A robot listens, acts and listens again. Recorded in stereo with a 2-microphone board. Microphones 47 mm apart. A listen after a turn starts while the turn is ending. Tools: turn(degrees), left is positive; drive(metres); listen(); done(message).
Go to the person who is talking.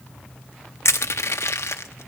listen()
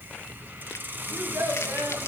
turn(degrees=-70)
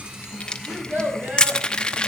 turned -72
turn(degrees=-40)
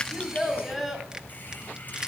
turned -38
drive(metres=1.0)
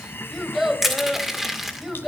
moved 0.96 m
drive(metres=1.0)
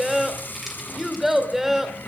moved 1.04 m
drive(metres=1.0)
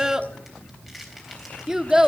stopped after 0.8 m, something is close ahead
turn(degrees=-15)
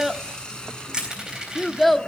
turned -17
done("I am next to the child speaking.")